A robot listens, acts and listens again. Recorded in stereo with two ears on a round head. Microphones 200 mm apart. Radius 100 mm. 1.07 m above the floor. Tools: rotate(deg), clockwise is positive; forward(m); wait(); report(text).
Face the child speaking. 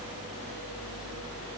wait()
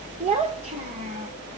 rotate(35)
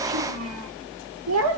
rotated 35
rotate(105)
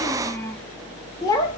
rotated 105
rotate(-15)
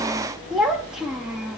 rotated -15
report("Found it: a child speaking, straight ahead, 1 to 2 m away.")